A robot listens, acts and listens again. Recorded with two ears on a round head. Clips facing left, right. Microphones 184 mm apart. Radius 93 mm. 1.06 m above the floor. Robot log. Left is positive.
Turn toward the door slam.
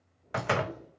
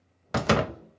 note: The door slam: about 50° right or 130° right.
cmd yaw -50
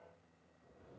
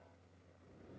cmd idle
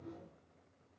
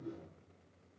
end: I heard a door slam, but can't make it out now. It was about straight ahead or 80° right.